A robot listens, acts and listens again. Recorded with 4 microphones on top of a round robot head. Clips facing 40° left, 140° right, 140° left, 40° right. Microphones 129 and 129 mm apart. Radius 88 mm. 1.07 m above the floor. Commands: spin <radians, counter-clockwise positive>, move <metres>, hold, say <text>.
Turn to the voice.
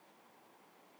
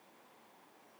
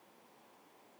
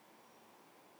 hold
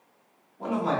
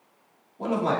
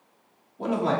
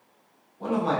spin 2.79
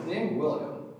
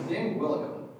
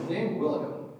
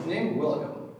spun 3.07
spin -0.26
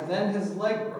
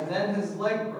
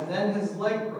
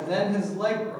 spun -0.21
say Facing the man speaking.